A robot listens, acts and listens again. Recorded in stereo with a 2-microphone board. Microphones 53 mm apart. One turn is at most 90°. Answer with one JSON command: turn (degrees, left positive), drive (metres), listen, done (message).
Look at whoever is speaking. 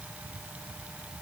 {"listen": true}
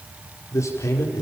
{"turn": 70}
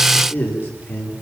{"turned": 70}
{"turn": 40}
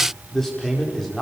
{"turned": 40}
{"done": "Found it: a man speaking, straight ahead."}